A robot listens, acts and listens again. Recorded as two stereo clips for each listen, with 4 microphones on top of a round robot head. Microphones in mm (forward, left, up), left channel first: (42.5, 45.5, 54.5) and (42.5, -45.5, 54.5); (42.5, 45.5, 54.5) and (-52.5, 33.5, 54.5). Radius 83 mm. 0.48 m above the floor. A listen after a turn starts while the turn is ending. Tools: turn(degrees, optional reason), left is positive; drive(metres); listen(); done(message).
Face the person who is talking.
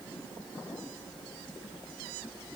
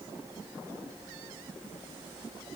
listen()
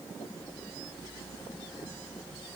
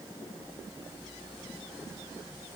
listen()
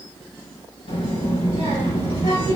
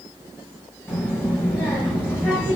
turn(degrees=75, reason="The child speaking: 75° left.")
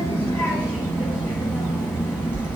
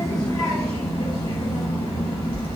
turn(degrees=25, reason="The child speaking is now 25° left.")
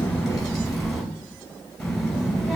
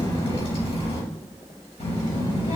done("Found it: a child speaking, straight ahead.")